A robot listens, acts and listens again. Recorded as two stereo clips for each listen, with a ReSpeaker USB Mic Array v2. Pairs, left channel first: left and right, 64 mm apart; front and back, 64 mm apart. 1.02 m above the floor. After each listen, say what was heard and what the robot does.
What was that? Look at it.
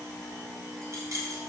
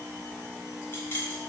The keys jangling: 55° right. Turn 55° right.
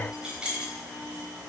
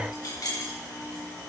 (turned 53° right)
The keys jangling is now 15° right. Turn 15° right.
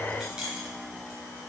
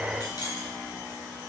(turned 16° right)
The keys jangling is now 10° right. Turn 10° right.
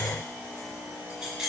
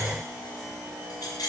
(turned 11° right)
The keys jangling is now 10° right. Turn 10° right.
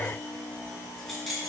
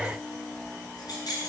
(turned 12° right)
Found it: keys jangling, straight ahead.